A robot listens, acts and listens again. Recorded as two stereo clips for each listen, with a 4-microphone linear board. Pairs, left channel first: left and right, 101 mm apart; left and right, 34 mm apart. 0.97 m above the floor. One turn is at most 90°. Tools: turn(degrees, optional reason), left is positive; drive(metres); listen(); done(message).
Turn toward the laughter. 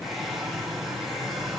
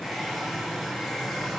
listen()
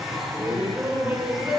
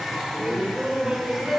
turn(degrees=-30)
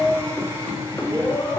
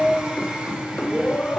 turn(degrees=25, reason="So it is at 25° left.")
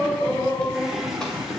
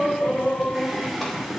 done("Facing the laughter.")